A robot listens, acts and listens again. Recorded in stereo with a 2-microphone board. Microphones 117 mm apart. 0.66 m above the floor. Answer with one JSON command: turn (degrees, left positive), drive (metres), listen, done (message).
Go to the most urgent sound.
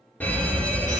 {"turn": 30}
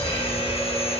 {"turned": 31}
{"turn": 130}
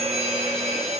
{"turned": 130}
{"drive": 1.0}
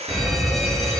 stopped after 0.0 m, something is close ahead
{"done": "Something is in my way. I am facing the fire alarm but have not reached it."}